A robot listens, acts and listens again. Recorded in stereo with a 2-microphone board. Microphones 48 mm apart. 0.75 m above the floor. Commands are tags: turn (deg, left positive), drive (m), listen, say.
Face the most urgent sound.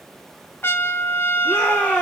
<turn deg="20"/>
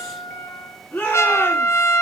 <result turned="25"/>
<turn deg="140"/>
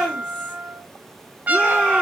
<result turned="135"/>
<say>Facing the shout, over 4 m away.</say>